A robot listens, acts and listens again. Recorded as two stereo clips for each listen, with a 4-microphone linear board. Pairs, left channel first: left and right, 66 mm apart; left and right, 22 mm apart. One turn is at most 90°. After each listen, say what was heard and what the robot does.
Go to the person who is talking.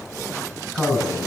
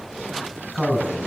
Turn 30° right.
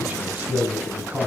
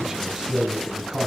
So it is at 140° right. Turn 90° right.
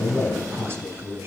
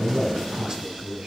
The man speaking is now 35° right. Turn 35° right.
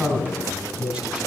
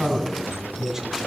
The man speaking is now 15° right. Turn 15° right.
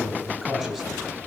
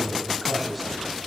Drive 1.0 m forward.
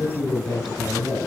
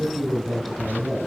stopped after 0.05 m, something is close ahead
The man speaking is now 10° left. Turn 10° left.
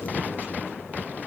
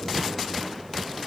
Keep listening.
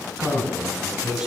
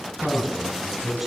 Something is in my way. I am facing the man speaking but have not reached it.